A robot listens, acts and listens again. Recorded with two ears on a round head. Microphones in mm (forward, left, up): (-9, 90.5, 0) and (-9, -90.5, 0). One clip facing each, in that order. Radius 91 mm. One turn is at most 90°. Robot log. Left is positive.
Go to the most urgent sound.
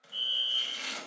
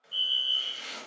note: The fire alarm: about 45° right or 135° right.
cmd yaw -45
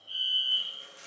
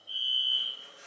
note: So it is at 10° right.
cmd yaw -10
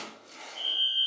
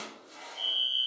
cmd fwd 1.0
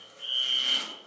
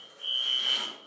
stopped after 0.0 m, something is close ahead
end: Something is in my way. I am facing the fire alarm but have not reached it.